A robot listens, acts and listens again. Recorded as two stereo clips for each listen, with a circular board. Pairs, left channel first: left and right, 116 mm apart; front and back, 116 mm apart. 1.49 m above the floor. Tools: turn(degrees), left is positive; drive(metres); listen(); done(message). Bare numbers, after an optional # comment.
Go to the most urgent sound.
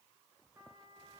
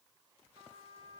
listen()
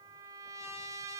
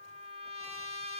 listen()
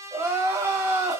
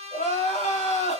# The crying: 20° right.
turn(-20)
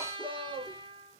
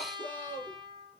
drive(1.0)
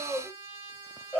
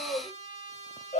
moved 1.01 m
# The crying is now 10° left.
turn(10)
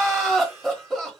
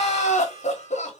drive(1.0)
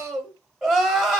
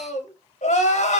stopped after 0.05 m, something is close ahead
done("I am next to the crying.")